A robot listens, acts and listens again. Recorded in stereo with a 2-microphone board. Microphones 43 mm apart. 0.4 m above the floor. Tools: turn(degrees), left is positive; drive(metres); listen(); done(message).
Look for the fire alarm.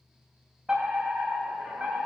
turn(degrees=-25)
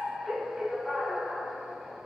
done("Facing the fire alarm, over 4 m away.")